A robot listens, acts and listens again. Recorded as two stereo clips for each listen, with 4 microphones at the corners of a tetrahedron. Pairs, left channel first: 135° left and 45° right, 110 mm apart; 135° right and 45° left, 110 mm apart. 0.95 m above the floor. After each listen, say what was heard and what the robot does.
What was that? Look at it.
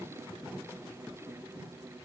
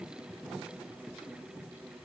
Keep listening.
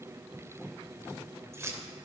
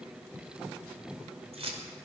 The keys jangling: 20° left. Turn 20° left.
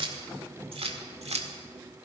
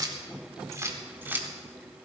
The keys jangling is now 30° right. Turn 30° right.
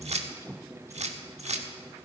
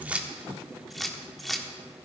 The keys jangling is now 45° right. Turn 45° right.
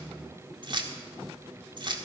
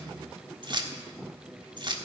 Found it: keys jangling, straight ahead, 1 to 2 m away.